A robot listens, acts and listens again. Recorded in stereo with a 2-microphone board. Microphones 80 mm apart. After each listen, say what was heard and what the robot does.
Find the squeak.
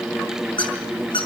Turn 90° left.
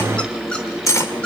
Keep listening.
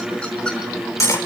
Keep listening.
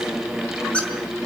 The squeak is now 15° left. Turn 15° left.
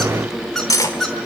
Facing the squeak.